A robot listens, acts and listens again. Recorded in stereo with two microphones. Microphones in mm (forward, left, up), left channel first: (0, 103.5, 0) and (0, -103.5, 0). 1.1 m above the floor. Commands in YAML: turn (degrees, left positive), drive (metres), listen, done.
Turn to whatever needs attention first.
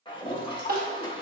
turn: -45
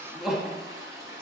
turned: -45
done: "Found it: crying, straight ahead."